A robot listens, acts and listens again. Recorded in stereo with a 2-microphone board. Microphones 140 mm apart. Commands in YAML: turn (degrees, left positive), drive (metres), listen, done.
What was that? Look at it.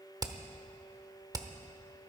turn: -30
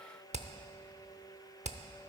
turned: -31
turn: -120
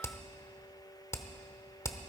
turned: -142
turn: 25
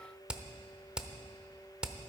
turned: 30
done: "Facing the hammering."